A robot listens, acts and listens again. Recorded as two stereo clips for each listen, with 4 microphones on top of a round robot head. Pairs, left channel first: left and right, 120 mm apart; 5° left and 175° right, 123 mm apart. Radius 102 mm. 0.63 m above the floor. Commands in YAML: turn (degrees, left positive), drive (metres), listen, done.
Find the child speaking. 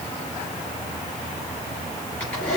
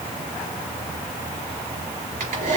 listen: true
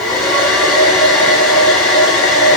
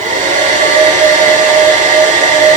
listen: true
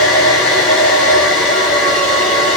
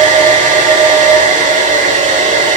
done: "I can't make out a child speaking to turn to."